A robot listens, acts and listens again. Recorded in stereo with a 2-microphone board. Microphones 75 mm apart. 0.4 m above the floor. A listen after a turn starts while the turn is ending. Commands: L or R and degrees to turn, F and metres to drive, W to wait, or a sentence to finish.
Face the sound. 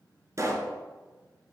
R45
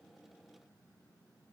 W
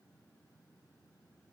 I heard a pop, but can't make it out now. It was about straight ahead or 90° right.